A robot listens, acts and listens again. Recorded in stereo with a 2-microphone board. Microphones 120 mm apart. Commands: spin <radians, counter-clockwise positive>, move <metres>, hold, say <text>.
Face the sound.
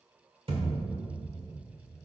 spin -0.87
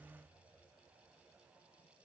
hold
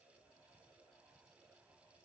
say I heard a thud, but can't make it out now. It was about straight ahead or 80° right.